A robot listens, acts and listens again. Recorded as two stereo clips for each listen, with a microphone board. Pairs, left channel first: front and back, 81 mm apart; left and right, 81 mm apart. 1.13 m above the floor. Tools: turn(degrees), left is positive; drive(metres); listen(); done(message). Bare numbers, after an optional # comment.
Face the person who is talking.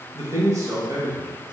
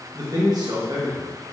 # The man speaking: 125° right.
turn(-125)
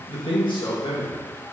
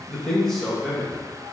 done("Facing the man speaking.")